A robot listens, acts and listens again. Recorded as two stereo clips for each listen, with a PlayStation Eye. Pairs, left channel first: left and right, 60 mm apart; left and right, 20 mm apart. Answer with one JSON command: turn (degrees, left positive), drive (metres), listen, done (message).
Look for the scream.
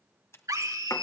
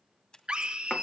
{"turn": -70}
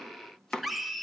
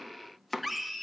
{"done": "Found it: a scream, straight ahead."}